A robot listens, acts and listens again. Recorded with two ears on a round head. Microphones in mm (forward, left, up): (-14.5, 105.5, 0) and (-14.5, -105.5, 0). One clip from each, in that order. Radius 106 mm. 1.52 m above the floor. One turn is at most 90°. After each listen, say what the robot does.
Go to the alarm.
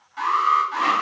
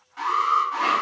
Turn 15° left.
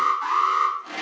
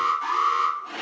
Drive 1.0 m forward.
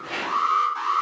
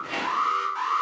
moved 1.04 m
Drive 1.0 m forward.
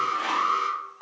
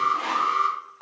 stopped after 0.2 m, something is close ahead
I am next to the alarm.